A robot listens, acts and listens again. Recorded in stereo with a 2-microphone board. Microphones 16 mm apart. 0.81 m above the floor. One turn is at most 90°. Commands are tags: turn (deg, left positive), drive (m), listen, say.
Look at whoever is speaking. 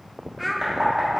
<turn deg="30"/>
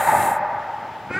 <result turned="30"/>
<turn deg="-20"/>
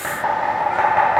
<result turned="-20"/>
<listen/>
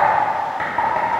<listen/>
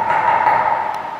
<say>I heard a child speaking from this way, but can't make it out now.</say>